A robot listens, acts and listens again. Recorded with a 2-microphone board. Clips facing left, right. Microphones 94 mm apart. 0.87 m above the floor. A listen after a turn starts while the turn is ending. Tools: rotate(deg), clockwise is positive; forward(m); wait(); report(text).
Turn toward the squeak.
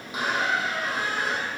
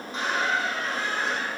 rotate(-30)
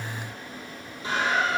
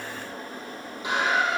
rotate(20)
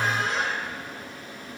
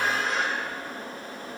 report("Found it: a squeak, straight ahead, 1 to 2 m away.")